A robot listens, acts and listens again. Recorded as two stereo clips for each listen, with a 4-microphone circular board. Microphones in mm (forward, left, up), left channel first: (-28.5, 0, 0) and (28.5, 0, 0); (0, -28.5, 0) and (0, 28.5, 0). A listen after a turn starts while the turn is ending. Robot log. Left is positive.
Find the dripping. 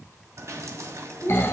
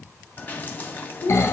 note: The dripping: 30° right.
cmd yaw -30
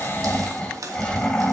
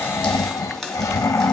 note: The dripping is now 10° right.
cmd yaw -10
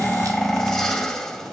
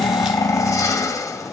cmd idle
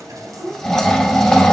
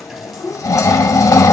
cmd idle
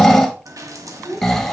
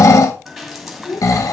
end: Facing the dripping, 2 to 4 m away.